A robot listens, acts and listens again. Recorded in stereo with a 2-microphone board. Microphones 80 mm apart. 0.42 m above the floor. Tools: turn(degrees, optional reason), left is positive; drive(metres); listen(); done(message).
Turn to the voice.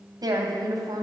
turn(degrees=-55, reason="The woman speaking: about 55° right or 125° right.")
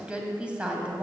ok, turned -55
turn(degrees=-15, reason="So it is at 15° right.")
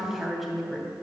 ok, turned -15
done("Facing the woman speaking.")